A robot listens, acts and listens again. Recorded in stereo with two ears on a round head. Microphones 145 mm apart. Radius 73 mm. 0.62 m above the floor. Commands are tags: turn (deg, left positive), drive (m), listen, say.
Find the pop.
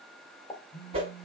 <turn deg="20"/>
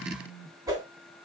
<listen/>
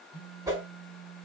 <say>I heard a pop, but can't make it out now. It was about straight ahead or 140° left.</say>